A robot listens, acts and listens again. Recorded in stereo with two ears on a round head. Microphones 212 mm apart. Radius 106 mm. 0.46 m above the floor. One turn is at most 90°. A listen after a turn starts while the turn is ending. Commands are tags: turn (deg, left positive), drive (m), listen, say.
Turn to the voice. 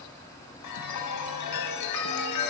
<listen/>
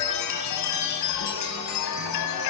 <listen/>
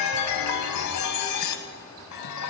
<say>I can't make out anyone speaking, only a chime.</say>